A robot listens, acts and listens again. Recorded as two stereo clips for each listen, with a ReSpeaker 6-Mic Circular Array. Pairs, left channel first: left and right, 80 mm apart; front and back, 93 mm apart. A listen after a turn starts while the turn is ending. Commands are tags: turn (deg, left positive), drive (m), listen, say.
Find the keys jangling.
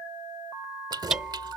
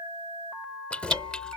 <turn deg="-75"/>
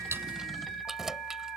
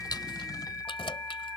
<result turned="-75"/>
<say>Facing the keys jangling.</say>